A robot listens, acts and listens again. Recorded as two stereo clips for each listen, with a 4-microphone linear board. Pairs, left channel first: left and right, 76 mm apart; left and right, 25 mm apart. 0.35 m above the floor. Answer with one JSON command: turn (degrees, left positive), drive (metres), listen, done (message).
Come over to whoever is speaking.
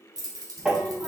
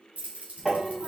{"turn": -30}
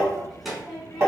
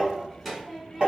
{"drive": 1.0}
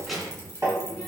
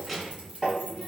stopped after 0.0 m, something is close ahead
{"done": "Something is in my way. I am facing the child speaking but have not reached it."}